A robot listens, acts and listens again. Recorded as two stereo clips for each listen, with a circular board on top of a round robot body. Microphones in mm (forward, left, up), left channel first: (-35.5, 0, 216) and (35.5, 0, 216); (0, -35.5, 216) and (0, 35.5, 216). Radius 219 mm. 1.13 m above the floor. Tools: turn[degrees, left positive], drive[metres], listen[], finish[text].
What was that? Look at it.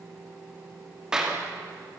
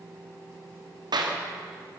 Thought: The clap: 80° left.
Action: turn[80]
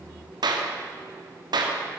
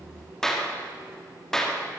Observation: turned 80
Action: finish[Found it: a clap, straight ahead, 2 to 4 m away.]